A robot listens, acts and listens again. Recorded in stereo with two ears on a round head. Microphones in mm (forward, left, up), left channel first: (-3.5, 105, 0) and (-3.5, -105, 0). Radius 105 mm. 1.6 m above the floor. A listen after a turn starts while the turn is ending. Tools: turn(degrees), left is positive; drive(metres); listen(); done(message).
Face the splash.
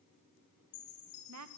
listen()
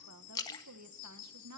turn(degrees=15)
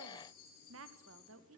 listen()
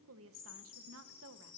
done("I heard a splash, but can't make it out now. It was about straight ahead or 150° left.")